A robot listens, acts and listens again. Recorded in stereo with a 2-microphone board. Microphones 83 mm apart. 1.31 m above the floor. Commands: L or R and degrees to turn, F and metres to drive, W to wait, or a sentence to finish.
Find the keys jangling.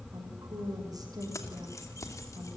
L40
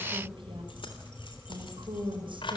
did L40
L95
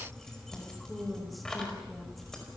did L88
Facing the keys jangling, over 4 m away.